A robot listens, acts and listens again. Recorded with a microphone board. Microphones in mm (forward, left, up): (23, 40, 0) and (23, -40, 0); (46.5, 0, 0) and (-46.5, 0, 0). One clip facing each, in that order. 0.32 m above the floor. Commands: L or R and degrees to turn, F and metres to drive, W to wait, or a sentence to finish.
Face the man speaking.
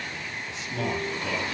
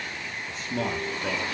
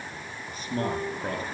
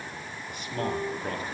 R50
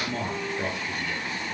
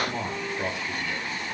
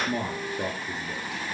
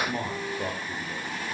Found it: a man speaking, straight ahead, over 4 m away.